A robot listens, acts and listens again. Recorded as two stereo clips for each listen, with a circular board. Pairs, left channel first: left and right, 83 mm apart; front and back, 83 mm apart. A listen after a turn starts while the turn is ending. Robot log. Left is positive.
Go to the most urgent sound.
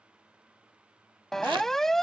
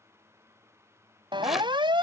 note: The siren: 175° left.
cmd yaw +175
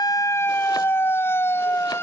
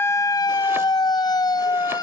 note: The siren is now 30° left.
cmd yaw +30
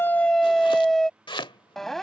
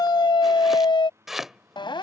cmd fwd 1.0
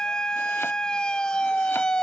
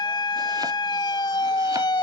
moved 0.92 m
note: The siren is now 10° left.
cmd yaw +10
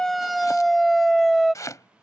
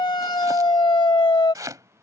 cmd fwd 1.0
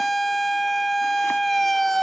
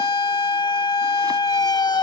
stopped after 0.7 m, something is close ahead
end: Arrived at the siren, straight ahead.